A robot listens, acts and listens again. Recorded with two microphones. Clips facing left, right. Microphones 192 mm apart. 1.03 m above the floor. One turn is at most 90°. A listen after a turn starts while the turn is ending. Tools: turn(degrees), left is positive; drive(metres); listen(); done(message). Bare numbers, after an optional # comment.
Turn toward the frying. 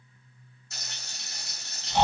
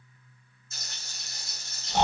# The frying: about 70° left or 110° left.
turn(70)
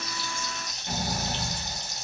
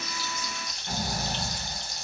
# So it is at 20° left.
turn(20)
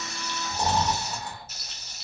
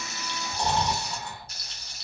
done("Facing the frying, 1 to 2 m away.")